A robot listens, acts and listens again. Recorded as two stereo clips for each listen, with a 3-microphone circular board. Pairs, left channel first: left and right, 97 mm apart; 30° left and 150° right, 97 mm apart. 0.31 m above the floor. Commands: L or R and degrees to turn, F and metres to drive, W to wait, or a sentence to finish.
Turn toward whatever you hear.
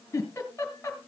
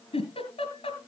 L25
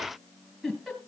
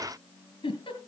Found it: a giggle, straight ahead, 2 to 4 m away.